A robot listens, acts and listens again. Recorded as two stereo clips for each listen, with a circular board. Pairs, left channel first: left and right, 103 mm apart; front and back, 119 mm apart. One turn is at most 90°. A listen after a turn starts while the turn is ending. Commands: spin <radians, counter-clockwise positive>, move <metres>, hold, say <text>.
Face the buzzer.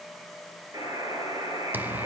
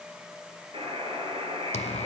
spin -1.57
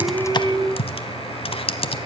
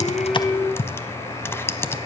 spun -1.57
spin -0.87
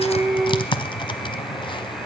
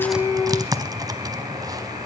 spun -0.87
hold
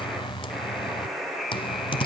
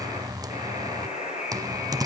say Found it: a buzzer, straight ahead.